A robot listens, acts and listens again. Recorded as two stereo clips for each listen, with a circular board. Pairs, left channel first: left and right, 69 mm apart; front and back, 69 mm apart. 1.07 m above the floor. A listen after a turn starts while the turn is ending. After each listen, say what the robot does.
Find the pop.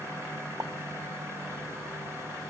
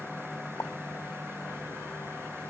Turn 50° right.
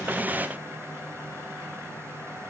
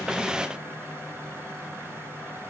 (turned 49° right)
I heard a pop from this way, but can't make it out now.